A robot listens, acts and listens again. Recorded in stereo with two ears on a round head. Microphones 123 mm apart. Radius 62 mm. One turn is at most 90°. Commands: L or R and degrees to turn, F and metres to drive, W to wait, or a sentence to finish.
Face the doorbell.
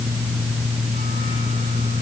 W
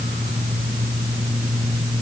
W
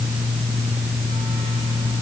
I can't make out a doorbell.